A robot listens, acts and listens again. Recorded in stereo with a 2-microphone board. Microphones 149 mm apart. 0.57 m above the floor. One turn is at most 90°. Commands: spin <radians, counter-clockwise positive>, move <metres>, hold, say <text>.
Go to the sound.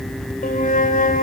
spin 1.13
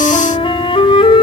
spin 0.70
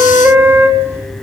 spin -0.26
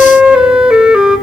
move 1.0
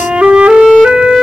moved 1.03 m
spin -0.17
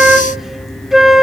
move 1.0
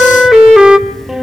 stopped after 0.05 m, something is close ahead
say Arrived at the flute, straight ahead.